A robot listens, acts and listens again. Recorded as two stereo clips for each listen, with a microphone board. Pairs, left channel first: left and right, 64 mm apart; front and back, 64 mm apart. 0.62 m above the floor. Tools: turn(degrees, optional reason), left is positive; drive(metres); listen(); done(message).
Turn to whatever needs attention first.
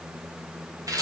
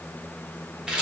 listen()
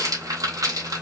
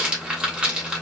listen()
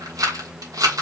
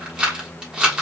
done("I can't make out anything urgent to turn to.")